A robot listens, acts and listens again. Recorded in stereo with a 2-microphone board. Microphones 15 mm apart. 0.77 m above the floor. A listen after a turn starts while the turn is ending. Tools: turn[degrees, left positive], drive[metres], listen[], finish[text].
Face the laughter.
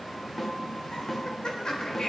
Thought: The laughter: about 55° left or 125° left.
Action: turn[55]
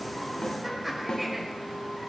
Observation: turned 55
Action: finish[Facing the laughter, over 4 m away.]